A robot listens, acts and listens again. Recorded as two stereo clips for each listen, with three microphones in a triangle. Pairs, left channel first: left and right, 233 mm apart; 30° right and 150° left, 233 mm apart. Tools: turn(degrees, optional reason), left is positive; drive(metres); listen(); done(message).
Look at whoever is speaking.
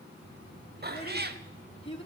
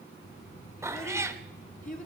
turn(degrees=25, reason="The child speaking: 25° left.")
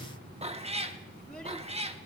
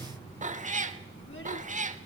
listen()
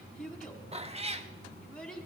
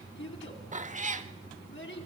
done("Facing the child speaking, 2 to 4 m away.")